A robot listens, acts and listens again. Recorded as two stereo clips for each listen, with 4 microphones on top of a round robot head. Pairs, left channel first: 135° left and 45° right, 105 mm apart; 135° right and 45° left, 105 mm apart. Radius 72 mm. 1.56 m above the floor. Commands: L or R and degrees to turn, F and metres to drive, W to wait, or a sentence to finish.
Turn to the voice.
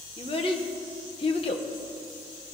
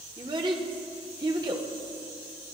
L100
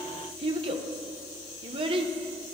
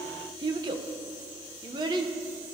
Facing the child speaking.